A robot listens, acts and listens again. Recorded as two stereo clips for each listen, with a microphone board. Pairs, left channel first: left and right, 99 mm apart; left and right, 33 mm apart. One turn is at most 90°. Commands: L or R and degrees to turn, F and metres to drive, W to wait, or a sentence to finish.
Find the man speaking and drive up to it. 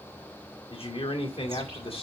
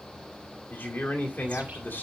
L75
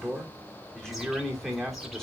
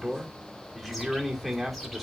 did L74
F1.0
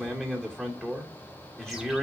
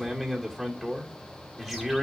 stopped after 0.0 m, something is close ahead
Something is in my way. I am facing the man speaking but have not reached it.